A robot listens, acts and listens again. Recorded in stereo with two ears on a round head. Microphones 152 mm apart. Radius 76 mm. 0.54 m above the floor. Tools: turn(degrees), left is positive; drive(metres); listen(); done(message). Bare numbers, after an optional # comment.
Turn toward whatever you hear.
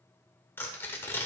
turn(30)
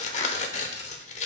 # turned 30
# So it is at 130° left.
turn(130)
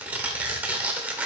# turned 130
# The tearing paper is now 10° right.
turn(-10)
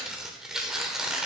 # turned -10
done("Found it: tearing paper, straight ahead, 1 to 2 m away.")